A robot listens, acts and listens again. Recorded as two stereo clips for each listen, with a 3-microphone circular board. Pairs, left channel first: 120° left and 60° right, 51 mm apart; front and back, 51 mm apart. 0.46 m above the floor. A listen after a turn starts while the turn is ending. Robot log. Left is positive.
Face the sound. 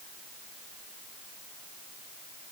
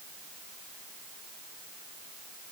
cmd idle
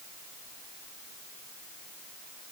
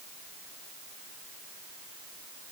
cmd idle
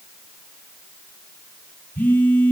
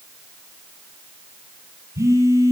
note: The phone buzzing: 175° left.
cmd yaw +175
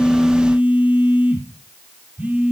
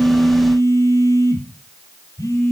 end: Found it: a phone buzzing, straight ahead, 2 to 4 m away.